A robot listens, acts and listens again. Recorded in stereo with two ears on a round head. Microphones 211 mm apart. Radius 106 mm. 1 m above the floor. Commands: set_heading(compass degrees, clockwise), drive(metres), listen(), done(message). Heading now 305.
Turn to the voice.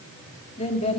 set_heading(280)
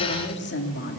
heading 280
set_heading(150)
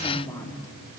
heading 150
set_heading(135)
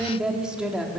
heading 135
done("Facing the woman speaking.")